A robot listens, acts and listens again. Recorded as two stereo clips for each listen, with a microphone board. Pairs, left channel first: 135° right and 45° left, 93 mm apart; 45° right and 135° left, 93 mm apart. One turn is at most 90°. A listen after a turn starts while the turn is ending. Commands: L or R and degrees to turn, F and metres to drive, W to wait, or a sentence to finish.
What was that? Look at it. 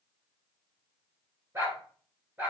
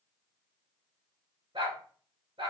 L90
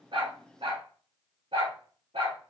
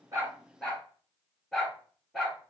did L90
L45
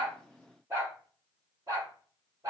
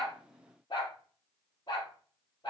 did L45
R10
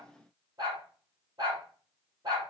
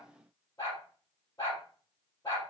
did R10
Found it: a dog barking, straight ahead.